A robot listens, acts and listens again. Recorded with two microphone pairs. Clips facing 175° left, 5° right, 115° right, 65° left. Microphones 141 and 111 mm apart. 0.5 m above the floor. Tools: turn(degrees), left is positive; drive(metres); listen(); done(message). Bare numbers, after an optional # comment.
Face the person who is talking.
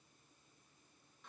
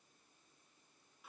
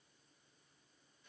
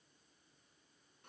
listen()
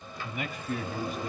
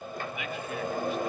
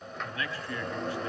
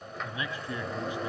# The man speaking: 135° left.
turn(135)
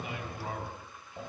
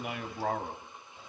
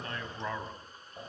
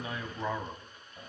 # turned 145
# The man speaking is now 15° right.
turn(-15)
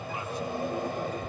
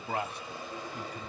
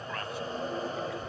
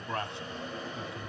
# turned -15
done("Facing the man speaking, 2 to 4 m away.")